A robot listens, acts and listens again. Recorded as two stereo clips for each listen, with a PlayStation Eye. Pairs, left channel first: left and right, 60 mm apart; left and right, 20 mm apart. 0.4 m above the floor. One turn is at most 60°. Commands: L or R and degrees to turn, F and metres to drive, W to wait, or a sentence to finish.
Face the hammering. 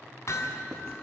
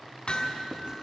L55
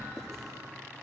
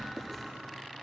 W
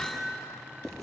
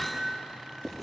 Facing the hammering, 2 to 4 m away.